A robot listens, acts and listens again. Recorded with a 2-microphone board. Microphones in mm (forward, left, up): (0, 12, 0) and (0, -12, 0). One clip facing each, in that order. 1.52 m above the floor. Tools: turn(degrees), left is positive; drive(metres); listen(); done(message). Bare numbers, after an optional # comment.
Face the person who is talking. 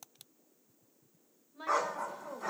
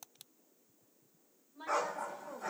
# The woman speaking: about 45° left or 135° left.
turn(45)
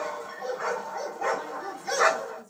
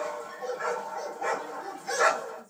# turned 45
listen()
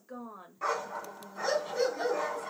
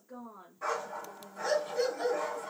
# So it is at 90° left.
turn(90)
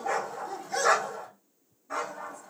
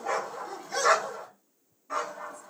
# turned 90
listen()
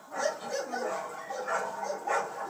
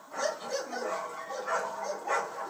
listen()
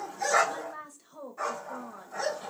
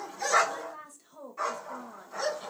done("Facing the woman speaking.")